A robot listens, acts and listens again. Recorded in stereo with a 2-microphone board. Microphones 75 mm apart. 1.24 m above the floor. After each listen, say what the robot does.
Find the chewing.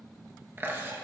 Turn 30° right.
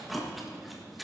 Found it: chewing, straight ahead, 1 to 2 m away.